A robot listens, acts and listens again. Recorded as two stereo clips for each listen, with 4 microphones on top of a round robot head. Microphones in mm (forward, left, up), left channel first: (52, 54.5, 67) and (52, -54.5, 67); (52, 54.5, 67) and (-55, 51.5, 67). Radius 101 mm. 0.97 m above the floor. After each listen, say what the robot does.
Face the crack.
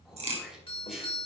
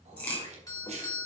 Turn 75° right.
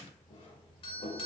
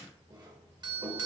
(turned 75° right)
I heard a crack from this way, but can't make it out now.